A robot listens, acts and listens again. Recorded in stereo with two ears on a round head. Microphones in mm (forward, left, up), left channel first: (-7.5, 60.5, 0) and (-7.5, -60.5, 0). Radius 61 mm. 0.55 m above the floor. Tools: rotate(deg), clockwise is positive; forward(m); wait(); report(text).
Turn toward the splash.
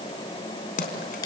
rotate(-70)
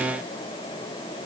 wait()
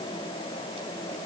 report("I heard a splash, but can't make it out now. It was about straight ahead or 40° left.")